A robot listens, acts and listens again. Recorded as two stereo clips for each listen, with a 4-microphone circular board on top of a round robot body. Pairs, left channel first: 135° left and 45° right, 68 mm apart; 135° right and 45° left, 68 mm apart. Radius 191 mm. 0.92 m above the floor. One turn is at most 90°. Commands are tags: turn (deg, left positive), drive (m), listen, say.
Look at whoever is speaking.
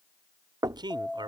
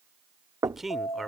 <turn deg="-45"/>
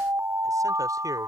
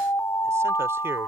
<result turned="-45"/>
<listen/>
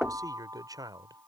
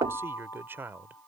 <turn deg="-15"/>
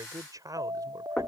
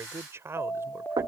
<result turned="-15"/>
<turn deg="-10"/>
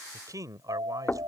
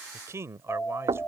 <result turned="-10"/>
<say>Facing the man speaking.</say>